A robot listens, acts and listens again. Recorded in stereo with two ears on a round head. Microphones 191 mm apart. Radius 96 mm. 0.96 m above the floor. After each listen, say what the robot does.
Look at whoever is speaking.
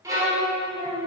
Turn 30° right.
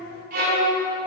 Keep listening.
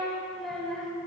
Facing the child speaking.